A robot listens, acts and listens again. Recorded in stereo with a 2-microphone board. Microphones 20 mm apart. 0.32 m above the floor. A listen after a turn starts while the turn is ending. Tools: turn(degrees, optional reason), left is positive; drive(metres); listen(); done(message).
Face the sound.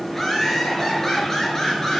turn(degrees=25, reason="The laughter: about 25° left or 155° left.")
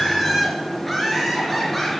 turn(degrees=30)
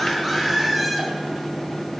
done("Found it: laughter, straight ahead, over 4 m away.")